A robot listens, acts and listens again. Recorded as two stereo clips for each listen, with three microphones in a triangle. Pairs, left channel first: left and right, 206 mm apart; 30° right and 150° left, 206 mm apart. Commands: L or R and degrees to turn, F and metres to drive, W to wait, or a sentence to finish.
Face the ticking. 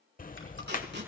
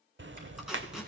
L135
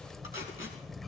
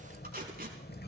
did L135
Facing the ticking, under 1 m away.